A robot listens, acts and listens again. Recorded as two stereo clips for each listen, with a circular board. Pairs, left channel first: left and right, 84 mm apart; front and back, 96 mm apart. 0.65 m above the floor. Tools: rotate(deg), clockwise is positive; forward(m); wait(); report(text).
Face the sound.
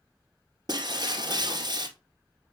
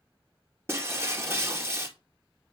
rotate(120)
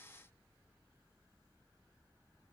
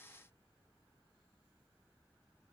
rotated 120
report("Facing where the breaking glass came from. I can't hear it now.")